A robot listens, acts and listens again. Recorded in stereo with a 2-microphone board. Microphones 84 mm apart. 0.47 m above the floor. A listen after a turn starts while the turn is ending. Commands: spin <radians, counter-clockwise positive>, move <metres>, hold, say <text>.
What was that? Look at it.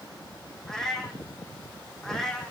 spin 0.52
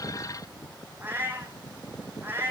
spin -0.44
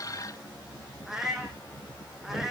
say Facing the cat meowing.